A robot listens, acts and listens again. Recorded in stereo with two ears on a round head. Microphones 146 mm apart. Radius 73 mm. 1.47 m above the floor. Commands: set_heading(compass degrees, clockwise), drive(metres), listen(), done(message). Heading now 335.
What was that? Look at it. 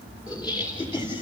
set_heading(300)
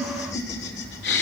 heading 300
set_heading(200)
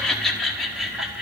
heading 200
done("Found it: laughter, straight ahead, 2 to 4 m away.")